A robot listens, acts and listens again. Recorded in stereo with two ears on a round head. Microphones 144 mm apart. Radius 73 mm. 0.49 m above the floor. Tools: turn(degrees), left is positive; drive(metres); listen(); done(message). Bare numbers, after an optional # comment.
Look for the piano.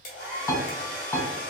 # The piano: about 20° left or 160° left.
turn(20)
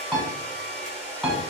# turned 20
done("Found it: a piano, straight ahead.")